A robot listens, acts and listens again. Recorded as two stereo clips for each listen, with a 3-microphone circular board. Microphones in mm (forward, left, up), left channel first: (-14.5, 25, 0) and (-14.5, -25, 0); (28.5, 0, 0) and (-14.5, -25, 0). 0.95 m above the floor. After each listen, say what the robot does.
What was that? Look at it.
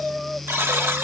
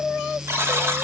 Turn 120° right.
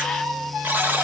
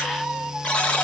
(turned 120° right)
Turn 40° right.
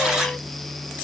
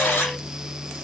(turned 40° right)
Keep listening.
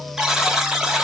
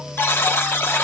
Turn 10° right.
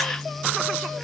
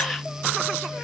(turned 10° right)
Keep listening.
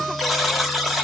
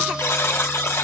Facing the buzzer.